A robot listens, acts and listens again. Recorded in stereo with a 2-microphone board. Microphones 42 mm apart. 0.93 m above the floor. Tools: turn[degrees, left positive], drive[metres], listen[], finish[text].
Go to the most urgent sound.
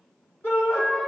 Thought: The shout: about 65° left or 115° left.
Action: turn[65]
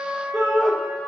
Action: drive[1.0]
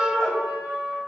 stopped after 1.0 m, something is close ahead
Action: finish[Arrived at the shout, straight ahead.]